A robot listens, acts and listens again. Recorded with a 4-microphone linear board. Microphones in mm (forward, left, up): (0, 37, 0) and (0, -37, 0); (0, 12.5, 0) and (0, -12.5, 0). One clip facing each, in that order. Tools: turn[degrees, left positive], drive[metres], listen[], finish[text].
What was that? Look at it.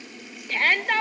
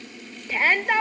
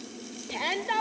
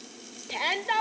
Action: turn[-30]
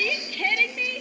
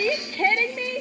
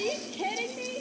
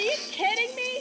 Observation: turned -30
Thought: So it is at 140° right.
Action: turn[-140]
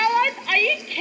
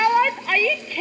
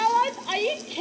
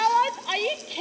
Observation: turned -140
Thought: The shout is now 10° right.
Action: turn[-10]
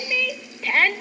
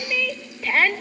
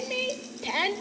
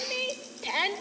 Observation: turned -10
Action: finish[Facing the shout.]